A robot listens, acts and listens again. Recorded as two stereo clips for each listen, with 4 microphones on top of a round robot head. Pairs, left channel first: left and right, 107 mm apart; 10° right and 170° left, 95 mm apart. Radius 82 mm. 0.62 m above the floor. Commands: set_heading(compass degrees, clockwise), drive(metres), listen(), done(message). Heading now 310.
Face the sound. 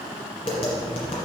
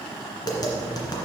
set_heading(275)
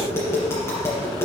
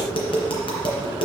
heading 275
set_heading(255)
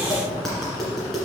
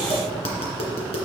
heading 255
done("Found it: tapping, straight ahead.")